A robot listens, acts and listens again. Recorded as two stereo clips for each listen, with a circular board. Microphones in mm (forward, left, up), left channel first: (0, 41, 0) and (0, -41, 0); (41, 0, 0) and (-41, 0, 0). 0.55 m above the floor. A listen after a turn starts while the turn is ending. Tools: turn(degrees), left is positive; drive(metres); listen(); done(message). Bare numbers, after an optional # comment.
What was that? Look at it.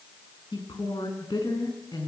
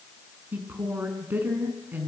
# The woman speaking: 115° left.
turn(115)
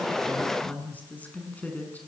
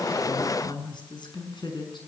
# The woman speaking is now 20° left.
turn(20)
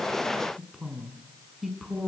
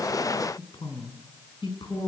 done("Found it: a woman speaking, straight ahead.")